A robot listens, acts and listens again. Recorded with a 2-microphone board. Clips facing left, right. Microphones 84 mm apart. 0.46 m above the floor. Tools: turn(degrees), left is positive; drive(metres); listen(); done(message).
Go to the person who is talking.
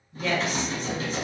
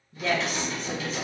turn(degrees=-35)
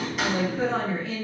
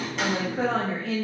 turn(degrees=-110)
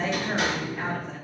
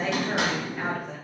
turn(degrees=-10)
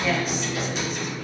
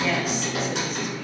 listen()
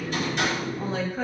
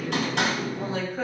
drive(metres=1.0)
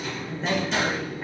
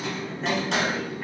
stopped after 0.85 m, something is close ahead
done("Arrived at the woman speaking, straight ahead.")